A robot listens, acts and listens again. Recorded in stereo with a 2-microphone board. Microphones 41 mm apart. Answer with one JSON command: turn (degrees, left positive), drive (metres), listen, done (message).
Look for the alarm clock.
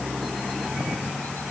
{"listen": true}
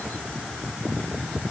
{"listen": true}
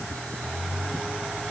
{"done": "I can't make out an alarm clock to turn to."}